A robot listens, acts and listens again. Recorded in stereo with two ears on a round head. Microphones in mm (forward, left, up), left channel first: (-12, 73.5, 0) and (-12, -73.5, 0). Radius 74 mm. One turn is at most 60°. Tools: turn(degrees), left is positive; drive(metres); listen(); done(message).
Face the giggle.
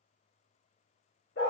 listen()
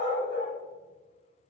listen()
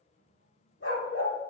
done("I can't make out a giggle, only a dog barking.")